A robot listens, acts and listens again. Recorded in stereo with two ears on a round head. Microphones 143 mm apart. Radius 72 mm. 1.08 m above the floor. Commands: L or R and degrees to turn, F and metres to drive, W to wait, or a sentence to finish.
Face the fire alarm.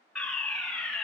L30
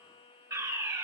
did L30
R25
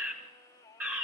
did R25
R15
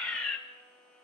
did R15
Facing the fire alarm, 1 to 2 m away.